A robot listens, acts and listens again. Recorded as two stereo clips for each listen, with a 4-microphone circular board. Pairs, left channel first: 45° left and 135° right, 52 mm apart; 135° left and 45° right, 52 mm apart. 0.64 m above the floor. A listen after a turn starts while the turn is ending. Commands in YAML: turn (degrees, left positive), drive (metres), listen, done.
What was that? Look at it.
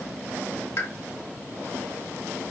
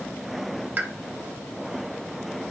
turn: 15
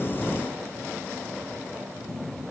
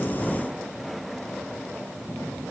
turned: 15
done: "Facing where the pop came from. I can't hear it now."